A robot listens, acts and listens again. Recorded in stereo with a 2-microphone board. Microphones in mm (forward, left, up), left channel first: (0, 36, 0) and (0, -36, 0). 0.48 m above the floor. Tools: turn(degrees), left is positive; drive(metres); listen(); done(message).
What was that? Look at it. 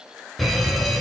turn(degrees=30)
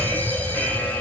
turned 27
turn(degrees=150)
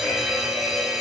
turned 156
done("Found it: a fire alarm, straight ahead.")